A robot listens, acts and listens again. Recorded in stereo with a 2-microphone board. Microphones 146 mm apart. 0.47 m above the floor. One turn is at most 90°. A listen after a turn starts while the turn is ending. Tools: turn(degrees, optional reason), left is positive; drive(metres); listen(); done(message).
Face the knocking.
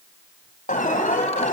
listen()
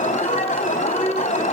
listen()
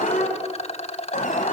done("I can't make out knocking, only an alarm and a rattle.")